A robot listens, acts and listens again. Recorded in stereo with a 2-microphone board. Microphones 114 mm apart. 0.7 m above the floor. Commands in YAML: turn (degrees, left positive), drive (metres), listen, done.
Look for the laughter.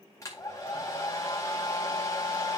listen: true
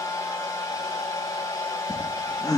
turn: 30
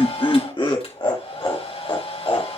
turn: 135
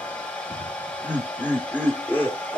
turn: 15
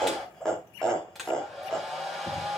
done: "Facing the laughter."